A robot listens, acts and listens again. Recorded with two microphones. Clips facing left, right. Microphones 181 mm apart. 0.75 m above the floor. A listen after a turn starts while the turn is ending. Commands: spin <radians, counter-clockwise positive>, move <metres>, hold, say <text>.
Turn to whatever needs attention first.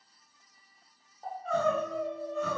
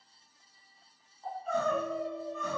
spin 1.57
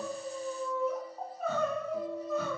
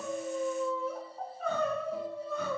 say Found it: crying, straight ahead, 1 to 2 m away.